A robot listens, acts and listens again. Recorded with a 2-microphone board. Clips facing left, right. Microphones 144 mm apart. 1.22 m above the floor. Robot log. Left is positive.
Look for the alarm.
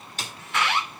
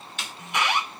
note: The alarm: about 20° right or 160° right.
cmd yaw -20
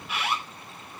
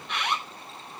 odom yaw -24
end: Facing the alarm.